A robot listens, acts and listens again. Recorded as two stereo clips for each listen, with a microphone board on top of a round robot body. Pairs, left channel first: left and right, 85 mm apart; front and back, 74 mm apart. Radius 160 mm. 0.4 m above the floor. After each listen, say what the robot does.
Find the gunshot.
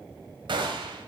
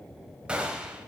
Turn 105° right.
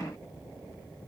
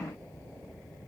Facing where the gunshot came from. I can't hear it now.